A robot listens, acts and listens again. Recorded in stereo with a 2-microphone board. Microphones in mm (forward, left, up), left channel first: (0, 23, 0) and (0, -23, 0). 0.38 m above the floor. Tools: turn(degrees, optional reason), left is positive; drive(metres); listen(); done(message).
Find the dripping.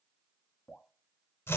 turn(degrees=25, reason="The dripping: about 25° left or 155° left.")
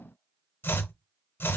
listen()
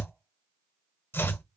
listen()
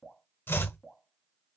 done("Facing the dripping.")